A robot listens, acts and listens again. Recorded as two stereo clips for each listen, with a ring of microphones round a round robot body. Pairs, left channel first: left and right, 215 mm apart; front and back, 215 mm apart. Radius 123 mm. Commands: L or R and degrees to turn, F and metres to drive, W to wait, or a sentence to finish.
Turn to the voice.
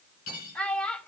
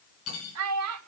L175
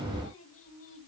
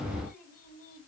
L55
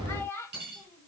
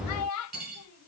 L10
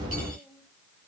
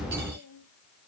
W
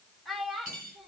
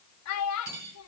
Facing the child speaking.